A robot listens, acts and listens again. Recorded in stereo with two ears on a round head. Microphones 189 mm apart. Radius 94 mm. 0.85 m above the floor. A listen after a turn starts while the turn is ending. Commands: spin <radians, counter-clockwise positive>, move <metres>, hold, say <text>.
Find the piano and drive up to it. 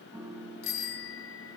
spin -0.26
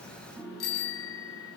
move 1.0
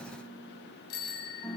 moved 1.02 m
move 1.0
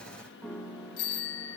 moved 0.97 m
move 1.0
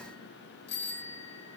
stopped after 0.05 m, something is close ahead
hold
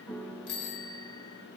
say Arrived at the piano, straight ahead.